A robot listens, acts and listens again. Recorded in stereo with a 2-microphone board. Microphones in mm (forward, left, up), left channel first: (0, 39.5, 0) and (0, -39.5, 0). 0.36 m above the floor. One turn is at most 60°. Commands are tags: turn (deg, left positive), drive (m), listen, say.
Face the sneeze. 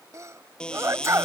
<turn deg="-40"/>
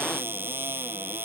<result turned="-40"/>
<listen/>
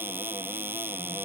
<say>I heard a sneeze, but can't make it out now. It was about straight ahead or 100° right.</say>